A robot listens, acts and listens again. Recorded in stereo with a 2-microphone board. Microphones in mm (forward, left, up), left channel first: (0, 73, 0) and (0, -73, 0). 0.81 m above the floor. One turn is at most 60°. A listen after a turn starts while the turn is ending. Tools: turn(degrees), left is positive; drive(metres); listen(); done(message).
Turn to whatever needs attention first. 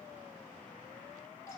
listen()
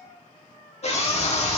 turn(degrees=45)
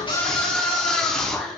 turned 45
done("Facing the scream, 1 to 2 m away.")